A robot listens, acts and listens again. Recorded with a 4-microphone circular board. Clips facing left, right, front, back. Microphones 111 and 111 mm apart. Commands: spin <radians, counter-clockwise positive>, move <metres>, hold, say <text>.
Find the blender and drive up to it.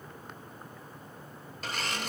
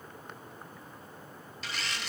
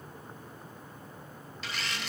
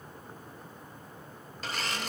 spin 2.36
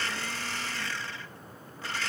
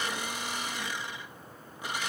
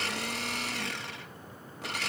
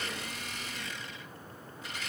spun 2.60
spin -0.26
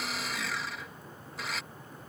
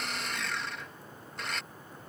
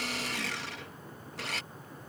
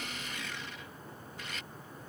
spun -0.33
move 1.0
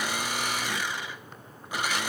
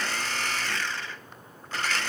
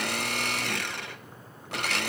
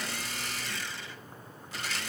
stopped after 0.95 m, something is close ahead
spin 0.26
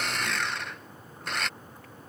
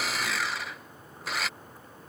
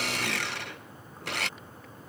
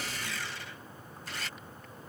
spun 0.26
say I am next to the blender.